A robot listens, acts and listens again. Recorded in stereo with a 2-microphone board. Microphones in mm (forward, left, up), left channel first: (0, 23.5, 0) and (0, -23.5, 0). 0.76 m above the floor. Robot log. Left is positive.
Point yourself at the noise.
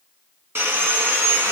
note: The sawing: about 55° right or 125° right.
cmd yaw -55
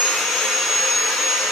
end: Found it: sawing, straight ahead, 2 to 4 m away.